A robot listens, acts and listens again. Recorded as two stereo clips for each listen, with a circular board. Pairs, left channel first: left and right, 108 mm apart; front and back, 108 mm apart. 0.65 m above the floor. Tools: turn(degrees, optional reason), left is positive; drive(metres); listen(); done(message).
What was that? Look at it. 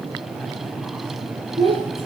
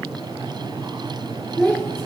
turn(degrees=-75, reason="The child speaking: 75° right.")
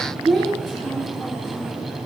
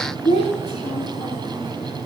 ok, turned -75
done("Found it: a child speaking, straight ahead, over 4 m away.")